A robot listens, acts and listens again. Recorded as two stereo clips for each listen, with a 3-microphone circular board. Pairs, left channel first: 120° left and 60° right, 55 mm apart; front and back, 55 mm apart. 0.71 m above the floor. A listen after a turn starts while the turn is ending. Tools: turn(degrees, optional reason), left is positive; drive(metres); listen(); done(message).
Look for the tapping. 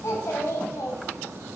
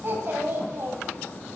listen()
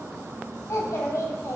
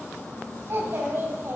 listen()
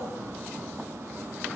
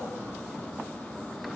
done("I can't make out tapping to turn to.")